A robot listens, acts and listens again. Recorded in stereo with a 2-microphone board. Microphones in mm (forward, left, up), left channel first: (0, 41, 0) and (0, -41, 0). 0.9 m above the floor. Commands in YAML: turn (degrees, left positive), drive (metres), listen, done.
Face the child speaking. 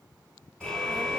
turn: -30
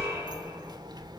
turn: -120
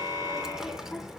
done: "Facing the child speaking."